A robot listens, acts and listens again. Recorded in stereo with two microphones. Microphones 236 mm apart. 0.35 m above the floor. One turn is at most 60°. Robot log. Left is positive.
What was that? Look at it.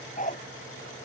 note: The dog barking: about 35° left or 145° left.
cmd yaw +35
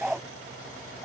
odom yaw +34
end: Found it: a dog barking, straight ahead.